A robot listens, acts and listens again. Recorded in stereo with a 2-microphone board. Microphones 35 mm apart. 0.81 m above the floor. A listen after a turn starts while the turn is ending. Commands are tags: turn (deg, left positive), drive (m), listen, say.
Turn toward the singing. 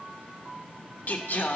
<turn deg="55"/>
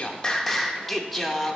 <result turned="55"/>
<say>Facing the singing.</say>